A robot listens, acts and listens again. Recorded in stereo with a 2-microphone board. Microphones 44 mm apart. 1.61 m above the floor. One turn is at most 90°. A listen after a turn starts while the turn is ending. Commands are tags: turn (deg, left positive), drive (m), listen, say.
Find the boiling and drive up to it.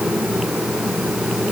<listen/>
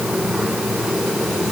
<listen/>
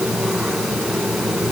<say>I can't make out boiling.</say>